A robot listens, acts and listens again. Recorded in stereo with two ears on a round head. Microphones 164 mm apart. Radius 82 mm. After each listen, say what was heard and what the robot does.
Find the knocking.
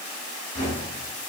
The knocking: about 40° left or 140° left. Turn 40° left.
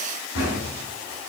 So it is at 100° left. Turn 100° left.
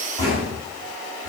The knocking is now 20° left. Turn 20° left.
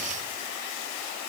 Keep listening.
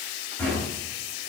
The knocking is now 10° left. Turn 10° left.
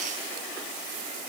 Keep listening.
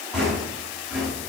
Found it: knocking, straight ahead, over 4 m away.